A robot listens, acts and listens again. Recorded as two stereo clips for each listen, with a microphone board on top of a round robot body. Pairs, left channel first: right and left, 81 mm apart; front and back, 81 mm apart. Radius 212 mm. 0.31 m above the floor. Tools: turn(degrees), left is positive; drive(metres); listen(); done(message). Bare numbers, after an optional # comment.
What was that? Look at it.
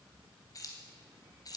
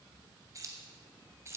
# The keys jangling: 125° right.
turn(-125)
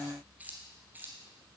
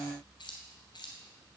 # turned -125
# The keys jangling is now 25° left.
turn(25)
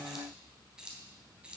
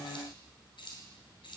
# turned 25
# The keys jangling is now 15° left.
turn(15)
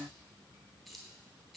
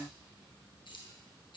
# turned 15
done("Found it: keys jangling, straight ahead.")